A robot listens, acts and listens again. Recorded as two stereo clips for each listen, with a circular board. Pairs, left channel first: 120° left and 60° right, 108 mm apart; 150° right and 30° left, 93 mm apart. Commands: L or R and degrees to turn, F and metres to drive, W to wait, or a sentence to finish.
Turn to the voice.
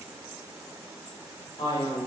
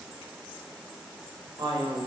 L70
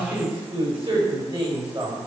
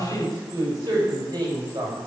R20
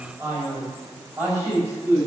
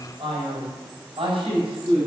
Facing the man speaking, over 4 m away.